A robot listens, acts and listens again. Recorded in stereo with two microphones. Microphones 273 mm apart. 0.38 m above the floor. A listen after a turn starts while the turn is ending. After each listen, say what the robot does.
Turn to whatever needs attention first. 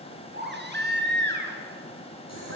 Turn 40° right.
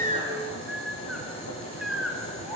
Found it: a baby crying, straight ahead, 2 to 4 m away.